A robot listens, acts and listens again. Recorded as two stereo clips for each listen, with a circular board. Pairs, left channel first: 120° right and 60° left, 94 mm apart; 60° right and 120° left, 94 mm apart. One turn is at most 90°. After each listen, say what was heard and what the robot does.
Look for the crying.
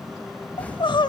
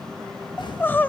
The crying: 125° right. Turn 90° right.
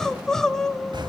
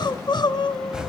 The crying is now 35° right. Turn 35° right.
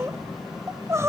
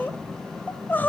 Found it: crying, straight ahead, under 1 m away.